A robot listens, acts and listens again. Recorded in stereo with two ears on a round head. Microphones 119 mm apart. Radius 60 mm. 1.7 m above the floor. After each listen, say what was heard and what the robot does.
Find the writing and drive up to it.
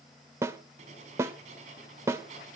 The writing: about 50° right or 130° right. Turn 50° right.
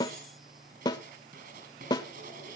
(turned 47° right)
So it is at 75° right. Turn 75° right.
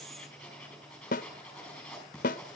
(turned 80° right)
Drive 1.0 m forward.
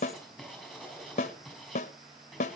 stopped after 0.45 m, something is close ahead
Something is in my way. I am facing the writing but have not reached it.